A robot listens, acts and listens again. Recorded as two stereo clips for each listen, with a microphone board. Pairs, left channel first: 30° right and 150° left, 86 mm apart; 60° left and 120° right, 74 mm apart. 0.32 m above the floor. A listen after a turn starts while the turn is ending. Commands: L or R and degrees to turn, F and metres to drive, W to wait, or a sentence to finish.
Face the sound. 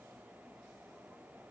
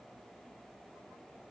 W
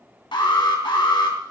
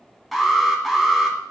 R30
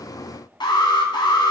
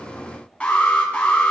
R10
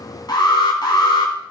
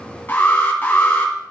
Facing the alarm.